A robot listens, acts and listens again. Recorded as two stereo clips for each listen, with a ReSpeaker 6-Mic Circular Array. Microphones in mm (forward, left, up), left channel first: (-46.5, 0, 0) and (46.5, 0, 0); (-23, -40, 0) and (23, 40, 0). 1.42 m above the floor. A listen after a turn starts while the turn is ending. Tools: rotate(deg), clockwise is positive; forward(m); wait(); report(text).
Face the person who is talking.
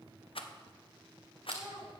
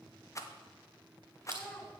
rotate(45)
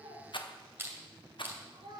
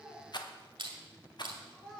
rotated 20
rotate(30)
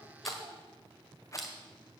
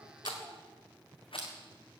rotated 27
wait()
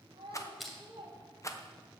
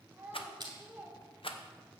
rotate(10)
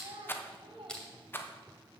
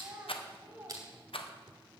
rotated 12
report("Facing the child speaking.")